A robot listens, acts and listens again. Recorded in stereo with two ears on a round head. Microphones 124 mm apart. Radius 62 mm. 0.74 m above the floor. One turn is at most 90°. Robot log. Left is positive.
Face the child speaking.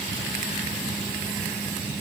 cmd idle
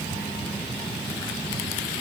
cmd idle
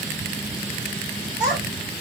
cmd yaw -30
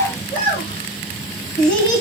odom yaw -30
note: So it is at 15° left.
cmd yaw +15
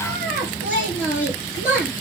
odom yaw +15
end: Facing the child speaking, over 4 m away.